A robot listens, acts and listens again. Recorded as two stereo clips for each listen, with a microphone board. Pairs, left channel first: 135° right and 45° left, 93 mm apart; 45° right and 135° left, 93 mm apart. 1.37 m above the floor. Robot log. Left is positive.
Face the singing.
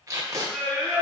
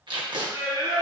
note: The singing: 145° left.
cmd yaw +145
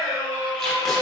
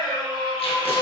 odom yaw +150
end: Facing the singing.